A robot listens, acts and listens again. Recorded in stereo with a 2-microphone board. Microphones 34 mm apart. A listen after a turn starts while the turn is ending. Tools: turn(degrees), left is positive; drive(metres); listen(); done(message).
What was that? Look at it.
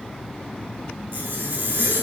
turn(degrees=-90)
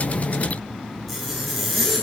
done("Facing the zipper, over 4 m away.")